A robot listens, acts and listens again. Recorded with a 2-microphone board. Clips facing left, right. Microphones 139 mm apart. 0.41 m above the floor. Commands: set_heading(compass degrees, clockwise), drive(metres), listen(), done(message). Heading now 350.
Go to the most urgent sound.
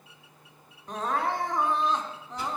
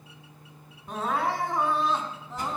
set_heading(20)
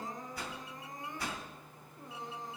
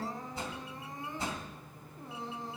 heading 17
set_heading(167)
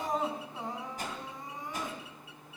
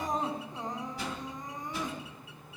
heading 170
drive(1.0)
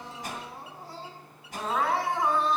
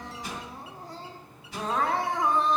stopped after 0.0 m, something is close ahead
done("Blocked. The crying is further on, straight ahead.")